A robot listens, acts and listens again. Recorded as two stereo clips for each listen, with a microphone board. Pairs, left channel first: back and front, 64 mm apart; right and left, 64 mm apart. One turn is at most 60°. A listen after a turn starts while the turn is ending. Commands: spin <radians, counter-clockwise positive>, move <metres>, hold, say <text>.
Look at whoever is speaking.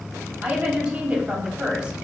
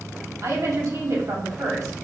spin 1.05
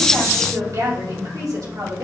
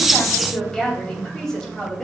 spin -0.17
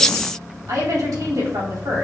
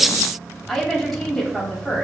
say Facing the woman speaking.